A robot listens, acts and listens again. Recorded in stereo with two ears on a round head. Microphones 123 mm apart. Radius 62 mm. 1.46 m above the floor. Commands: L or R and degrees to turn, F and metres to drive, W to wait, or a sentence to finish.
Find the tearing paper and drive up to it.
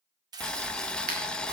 R30
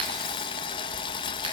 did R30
W
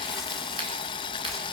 W
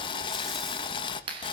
I heard tearing paper, but can't make it out now. It was about straight ahead or 120° right. I did not reach it.